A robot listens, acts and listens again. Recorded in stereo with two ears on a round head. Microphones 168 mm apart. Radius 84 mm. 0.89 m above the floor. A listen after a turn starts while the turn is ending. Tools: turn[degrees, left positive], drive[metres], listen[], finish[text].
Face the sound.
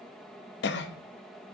Thought: The cough: about 60° left or 120° left.
Action: turn[60]
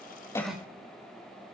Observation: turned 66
Action: finish[Facing the cough, under 1 m away.]